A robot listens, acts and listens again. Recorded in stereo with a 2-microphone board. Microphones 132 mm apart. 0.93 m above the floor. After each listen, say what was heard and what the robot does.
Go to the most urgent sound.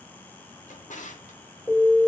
Turn 30° left.
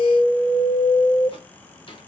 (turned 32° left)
So it is at 145° left. Turn 145° left.
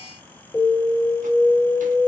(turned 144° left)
Drive 1.0 m forward.
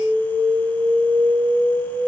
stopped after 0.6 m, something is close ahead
I am next to the alarm.